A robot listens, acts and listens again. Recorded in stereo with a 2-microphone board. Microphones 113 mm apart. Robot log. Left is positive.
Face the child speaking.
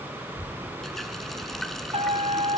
note: The child speaking: about 50° left or 130° left.
cmd yaw +50
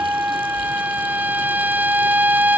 cmd idle
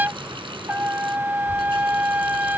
cmd idle
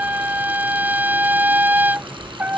note: So it is at 85° left.
cmd yaw +85
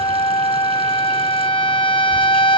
cmd idle
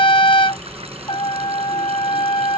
cmd idle
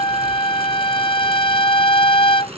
end: Facing where the child speaking came from. I can't hear it now.